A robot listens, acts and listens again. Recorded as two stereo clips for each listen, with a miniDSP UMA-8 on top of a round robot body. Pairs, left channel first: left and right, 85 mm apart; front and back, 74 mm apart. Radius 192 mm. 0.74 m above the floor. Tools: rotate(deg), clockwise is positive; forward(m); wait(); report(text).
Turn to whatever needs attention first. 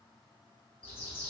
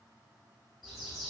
wait()
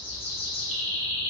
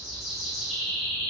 wait()
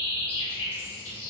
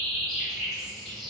report("I can't make out anything urgent to turn to.")